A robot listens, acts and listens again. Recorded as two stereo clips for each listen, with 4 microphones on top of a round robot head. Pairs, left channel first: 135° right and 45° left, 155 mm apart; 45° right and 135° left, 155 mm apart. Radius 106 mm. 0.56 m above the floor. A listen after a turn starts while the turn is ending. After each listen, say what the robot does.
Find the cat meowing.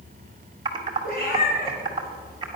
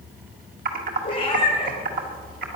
Turn 105° right.
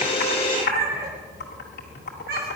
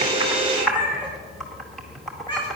Turn 15° left.
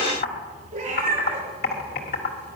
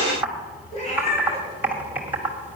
Facing the cat meowing.